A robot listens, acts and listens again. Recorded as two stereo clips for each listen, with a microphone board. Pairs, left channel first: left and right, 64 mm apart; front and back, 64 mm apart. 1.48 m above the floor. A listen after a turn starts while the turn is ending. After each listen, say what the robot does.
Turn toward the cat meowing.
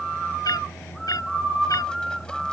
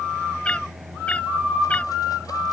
Turn 70° left.
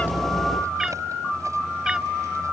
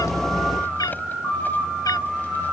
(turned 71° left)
Turn 10° right.
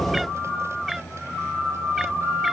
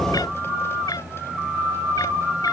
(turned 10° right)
Facing the cat meowing.